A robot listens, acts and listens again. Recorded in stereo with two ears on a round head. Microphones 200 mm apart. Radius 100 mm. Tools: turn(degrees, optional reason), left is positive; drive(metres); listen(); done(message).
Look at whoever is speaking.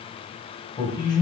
turn(degrees=20, reason="The man speaking: about 20° left or 160° left.")
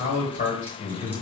turn(degrees=140, reason="So it is at 140° left.")
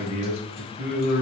turn(degrees=40, reason="The man speaking is now 40° left.")
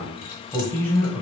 turn(degrees=10, reason="The man speaking is now 10° left.")
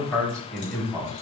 done("Facing the man speaking, 1 to 2 m away.")